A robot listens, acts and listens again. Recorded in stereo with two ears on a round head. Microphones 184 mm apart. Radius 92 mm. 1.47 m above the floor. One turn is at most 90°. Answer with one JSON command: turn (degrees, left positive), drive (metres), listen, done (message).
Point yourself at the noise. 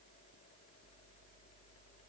{"listen": true}
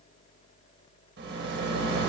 {"turn": -55}
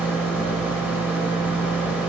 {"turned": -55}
{"turn": -10}
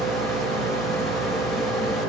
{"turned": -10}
{"done": "Found it: a rattle, straight ahead."}